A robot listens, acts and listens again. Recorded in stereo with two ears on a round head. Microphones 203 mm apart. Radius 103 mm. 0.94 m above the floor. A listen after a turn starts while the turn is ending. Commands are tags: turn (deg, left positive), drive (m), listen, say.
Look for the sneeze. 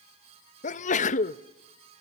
<turn deg="30"/>
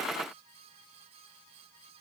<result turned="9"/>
<listen/>
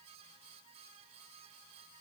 <say>I heard a sneeze, but can't make it out now. It was about 25° left or 140° left.</say>